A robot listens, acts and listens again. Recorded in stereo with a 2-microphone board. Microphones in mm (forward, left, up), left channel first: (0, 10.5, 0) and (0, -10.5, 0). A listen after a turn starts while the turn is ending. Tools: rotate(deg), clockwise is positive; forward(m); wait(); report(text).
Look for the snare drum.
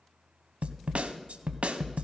rotate(90)
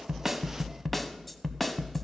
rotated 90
rotate(-10)
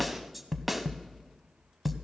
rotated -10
report("Facing the snare drum, under 1 m away.")